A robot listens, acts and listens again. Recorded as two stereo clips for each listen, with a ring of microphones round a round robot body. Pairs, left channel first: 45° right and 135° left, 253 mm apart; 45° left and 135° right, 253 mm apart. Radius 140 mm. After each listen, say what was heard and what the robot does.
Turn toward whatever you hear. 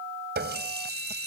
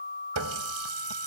The running tap: 170° right. Turn 170° right.
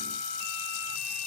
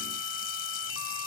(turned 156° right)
Nothing new. It was at 15° right. Turn 15° right.
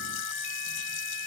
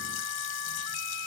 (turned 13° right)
Keep listening.
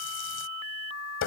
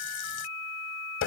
Facing the running tap.